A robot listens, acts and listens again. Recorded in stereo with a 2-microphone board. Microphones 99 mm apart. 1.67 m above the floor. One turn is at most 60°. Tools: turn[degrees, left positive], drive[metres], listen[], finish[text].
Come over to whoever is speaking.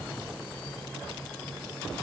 Action: listen[]
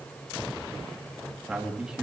Action: turn[-30]
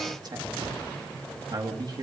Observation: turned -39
Thought: So it is at 135° right.
Action: turn[-60]
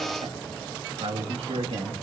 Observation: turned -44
Thought: The man speaking is now 90° right.
Action: turn[-60]
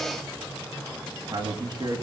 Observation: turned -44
Thought: The man speaking is now 45° right.
Action: turn[-45]
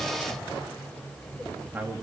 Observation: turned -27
Thought: The man speaking is now 20° right.
Action: turn[-20]
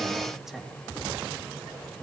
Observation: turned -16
Action: drive[1.0]
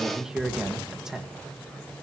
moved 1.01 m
Action: drive[1.0]
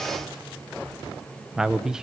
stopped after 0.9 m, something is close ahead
Action: finish[Arrived at the man speaking, straight ahead.]